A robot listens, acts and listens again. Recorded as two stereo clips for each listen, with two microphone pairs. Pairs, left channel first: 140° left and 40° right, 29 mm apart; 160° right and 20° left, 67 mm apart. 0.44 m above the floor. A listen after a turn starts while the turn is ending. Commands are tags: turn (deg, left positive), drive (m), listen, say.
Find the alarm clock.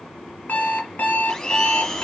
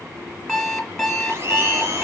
<turn deg="120"/>
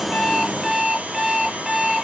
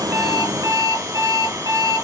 <turn deg="35"/>
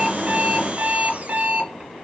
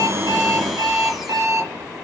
<turn deg="-20"/>
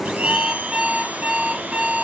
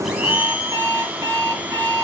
<say>Facing the alarm clock.</say>